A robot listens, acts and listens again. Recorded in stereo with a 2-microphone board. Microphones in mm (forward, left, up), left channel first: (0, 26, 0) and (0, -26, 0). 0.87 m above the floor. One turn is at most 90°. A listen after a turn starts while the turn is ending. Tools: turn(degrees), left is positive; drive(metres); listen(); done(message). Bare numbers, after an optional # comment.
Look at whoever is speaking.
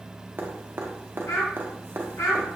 # The child speaking: about 70° left or 110° left.
turn(70)
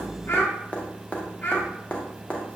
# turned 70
# So it is at 40° left.
turn(40)
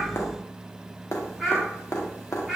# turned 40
done("Found it: a child speaking, straight ahead.")